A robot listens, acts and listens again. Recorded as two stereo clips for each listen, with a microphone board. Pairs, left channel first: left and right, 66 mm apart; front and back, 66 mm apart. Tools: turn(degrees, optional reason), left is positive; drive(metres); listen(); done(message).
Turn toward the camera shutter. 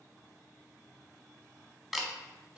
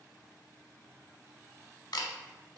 done("Found it: a camera shutter, straight ahead.")